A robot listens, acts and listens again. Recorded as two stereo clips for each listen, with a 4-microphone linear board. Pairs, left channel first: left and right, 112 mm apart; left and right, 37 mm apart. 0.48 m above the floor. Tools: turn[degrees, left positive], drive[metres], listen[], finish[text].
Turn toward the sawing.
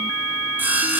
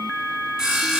Thought: The sawing: about 15° right or 165° right.
Action: turn[-15]
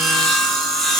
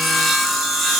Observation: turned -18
Action: finish[Found it: sawing, straight ahead, 2 to 4 m away.]